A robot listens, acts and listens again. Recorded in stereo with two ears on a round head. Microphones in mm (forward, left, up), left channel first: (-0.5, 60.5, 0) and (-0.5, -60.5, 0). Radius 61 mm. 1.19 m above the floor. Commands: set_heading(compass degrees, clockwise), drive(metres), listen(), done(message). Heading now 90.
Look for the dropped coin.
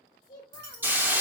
set_heading(180)
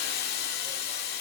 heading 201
set_heading(181)
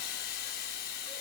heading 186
done("Facing where the dropped coin came from. I can't hear it now.")